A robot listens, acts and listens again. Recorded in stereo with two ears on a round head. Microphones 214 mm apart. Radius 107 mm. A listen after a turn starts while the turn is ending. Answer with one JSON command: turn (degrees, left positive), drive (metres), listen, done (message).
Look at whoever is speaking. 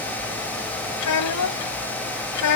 {"turn": 90}
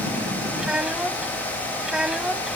{"done": "Found it: a child speaking, straight ahead."}